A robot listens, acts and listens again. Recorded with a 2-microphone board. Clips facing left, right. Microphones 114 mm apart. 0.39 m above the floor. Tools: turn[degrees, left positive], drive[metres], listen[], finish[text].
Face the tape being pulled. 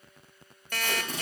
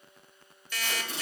Thought: The tape being pulled: about 45° left or 135° left.
Action: turn[45]
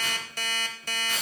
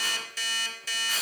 Action: finish[Found it: tape being pulled, straight ahead, over 4 m away.]